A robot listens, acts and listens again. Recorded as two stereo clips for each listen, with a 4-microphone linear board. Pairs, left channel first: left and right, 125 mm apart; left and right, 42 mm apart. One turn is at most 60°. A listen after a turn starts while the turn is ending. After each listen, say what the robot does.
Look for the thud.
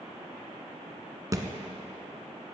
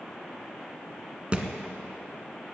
Turn 25° right.
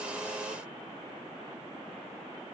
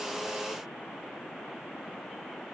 Keep listening.
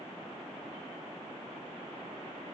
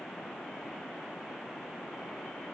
I heard a thud, but can't make it out now. It was about straight ahead or 130° right.